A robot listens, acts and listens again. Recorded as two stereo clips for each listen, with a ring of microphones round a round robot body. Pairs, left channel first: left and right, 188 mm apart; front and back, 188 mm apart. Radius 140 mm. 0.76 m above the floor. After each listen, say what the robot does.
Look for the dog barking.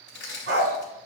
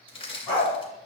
Turn 85° right.
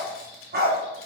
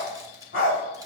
Turn 55° right.
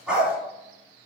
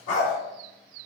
Facing the dog barking, 1 to 2 m away.